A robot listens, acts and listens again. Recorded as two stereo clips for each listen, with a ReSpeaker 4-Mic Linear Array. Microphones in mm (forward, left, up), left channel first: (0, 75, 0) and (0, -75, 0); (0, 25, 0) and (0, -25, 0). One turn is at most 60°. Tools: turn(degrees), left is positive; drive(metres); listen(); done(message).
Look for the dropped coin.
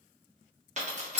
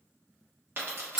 turn(degrees=-50)
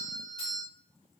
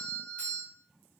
listen()
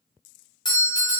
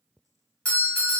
done("I heard a dropped coin, but can't make it out now. It was about straight ahead or 80° right.")